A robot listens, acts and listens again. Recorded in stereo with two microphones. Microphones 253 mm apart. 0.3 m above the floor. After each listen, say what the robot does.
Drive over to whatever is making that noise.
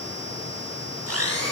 Turn 70° right.
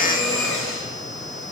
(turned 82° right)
Drive 1.0 m forward.
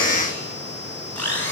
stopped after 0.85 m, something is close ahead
Something is in my way. I am facing the blender but have not reached it.